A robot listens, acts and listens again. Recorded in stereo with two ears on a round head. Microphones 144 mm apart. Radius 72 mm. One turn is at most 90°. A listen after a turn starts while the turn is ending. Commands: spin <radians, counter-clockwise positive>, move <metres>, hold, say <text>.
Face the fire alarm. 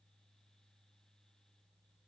hold
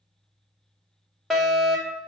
spin 0.52
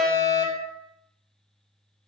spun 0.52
spin 1.57
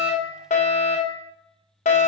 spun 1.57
spin 1.05
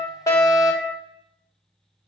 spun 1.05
say Facing the fire alarm.